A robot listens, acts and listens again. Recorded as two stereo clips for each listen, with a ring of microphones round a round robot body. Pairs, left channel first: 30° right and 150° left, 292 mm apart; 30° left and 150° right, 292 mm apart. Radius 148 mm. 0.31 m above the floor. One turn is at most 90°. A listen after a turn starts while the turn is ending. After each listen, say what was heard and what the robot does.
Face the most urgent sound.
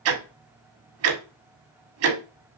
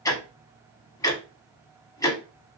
Keep listening.
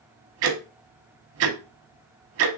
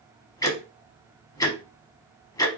Keep listening.
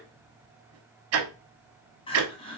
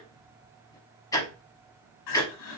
The crying: 40° left. Turn 40° left.
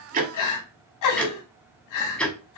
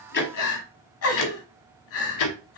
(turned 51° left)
The crying is now 10° right. Turn 10° right.
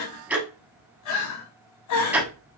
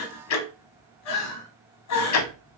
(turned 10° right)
Facing the crying, 1 to 2 m away.